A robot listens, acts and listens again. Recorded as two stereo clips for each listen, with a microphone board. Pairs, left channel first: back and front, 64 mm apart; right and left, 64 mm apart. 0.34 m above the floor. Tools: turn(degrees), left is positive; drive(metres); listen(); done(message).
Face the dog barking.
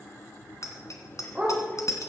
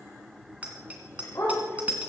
turn(degrees=-75)
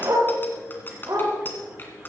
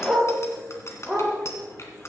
done("Found it: a dog barking, straight ahead, over 4 m away.")